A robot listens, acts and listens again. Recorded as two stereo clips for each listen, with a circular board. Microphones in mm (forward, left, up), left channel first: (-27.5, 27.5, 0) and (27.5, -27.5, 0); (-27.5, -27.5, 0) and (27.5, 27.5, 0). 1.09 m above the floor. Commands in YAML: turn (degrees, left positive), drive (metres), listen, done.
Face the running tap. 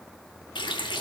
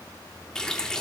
turn: 145
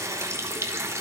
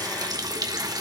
turn: 10
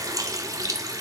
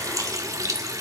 done: "Found it: a running tap, straight ahead."